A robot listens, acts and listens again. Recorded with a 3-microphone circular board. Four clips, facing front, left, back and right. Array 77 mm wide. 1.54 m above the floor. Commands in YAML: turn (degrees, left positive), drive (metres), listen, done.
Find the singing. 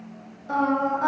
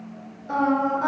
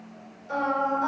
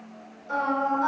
turn: 30
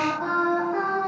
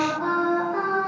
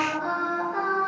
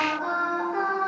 turn: 15
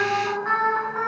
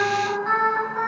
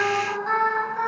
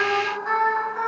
done: "Facing the singing."